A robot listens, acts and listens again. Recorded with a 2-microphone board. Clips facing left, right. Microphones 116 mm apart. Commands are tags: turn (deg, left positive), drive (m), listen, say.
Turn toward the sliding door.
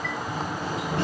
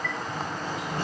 <turn deg="90"/>
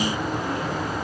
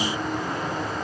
<say>Found it: a sliding door, straight ahead, over 4 m away.</say>